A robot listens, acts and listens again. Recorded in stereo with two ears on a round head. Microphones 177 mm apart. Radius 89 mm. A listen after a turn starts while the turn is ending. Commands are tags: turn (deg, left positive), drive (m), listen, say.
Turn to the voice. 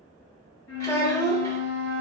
<turn deg="15"/>
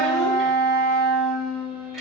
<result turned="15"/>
<listen/>
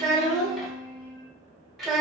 <say>Facing the child speaking, under 1 m away.</say>